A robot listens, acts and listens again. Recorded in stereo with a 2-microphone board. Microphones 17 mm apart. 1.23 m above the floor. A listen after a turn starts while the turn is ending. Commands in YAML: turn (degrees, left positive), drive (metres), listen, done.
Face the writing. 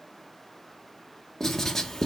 turn: 15
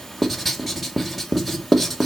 done: "Facing the writing, 1 to 2 m away."